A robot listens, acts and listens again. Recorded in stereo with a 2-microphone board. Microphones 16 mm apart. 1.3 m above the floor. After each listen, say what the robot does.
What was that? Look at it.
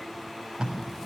Turn 55° right.
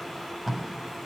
Found it: tape being pulled, straight ahead, over 4 m away.